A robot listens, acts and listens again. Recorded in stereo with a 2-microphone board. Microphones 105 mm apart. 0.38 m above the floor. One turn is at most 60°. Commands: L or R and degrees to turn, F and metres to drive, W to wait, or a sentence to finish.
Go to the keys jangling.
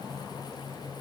W
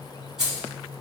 R30
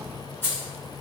L25
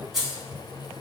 F1.0
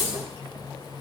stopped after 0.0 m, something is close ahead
Something is in my way. I am facing the keys jangling but have not reached it.